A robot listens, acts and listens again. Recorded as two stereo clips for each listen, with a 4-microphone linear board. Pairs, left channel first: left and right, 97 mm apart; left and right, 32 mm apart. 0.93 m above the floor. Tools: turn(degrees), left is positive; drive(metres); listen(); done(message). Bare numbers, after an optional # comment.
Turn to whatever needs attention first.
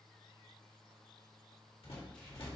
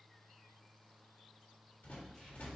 listen()
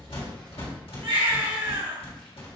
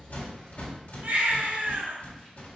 turn(-90)
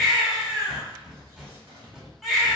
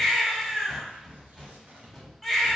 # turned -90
done("Facing the baby crying.")